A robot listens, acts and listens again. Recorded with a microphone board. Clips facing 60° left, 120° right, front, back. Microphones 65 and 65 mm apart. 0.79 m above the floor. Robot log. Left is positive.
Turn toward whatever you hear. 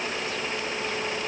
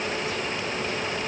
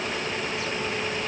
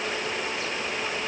cmd idle
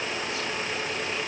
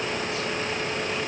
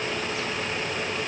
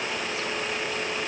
cmd idle
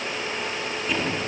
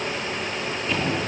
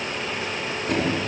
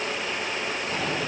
note: The drawer: 25° right.
cmd yaw -25
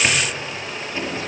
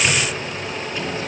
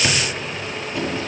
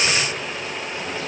end: Facing the drawer.